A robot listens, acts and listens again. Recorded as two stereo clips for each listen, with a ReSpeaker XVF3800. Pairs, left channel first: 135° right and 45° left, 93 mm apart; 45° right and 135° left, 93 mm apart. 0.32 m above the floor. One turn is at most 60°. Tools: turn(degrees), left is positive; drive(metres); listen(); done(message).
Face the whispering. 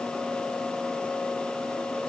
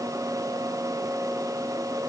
listen()
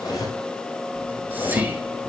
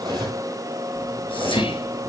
turn(degrees=-25)
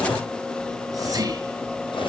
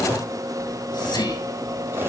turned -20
done("Found it: whispering, straight ahead, over 4 m away.")